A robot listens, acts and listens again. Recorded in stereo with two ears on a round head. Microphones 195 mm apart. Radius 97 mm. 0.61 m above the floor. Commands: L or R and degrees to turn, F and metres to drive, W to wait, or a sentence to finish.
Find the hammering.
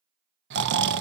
W
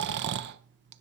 W
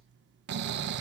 I can't make out hammering to turn to.